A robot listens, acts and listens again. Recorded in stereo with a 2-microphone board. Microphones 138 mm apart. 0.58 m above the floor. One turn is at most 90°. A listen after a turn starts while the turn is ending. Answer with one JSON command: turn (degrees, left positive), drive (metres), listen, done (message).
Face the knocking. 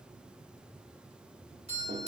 {"listen": true}
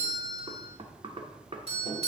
{"turn": -45}
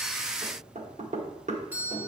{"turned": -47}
{"turn": -80}
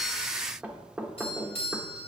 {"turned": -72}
{"turn": -10}
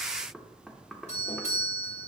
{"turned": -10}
{"done": "Found it: knocking, straight ahead."}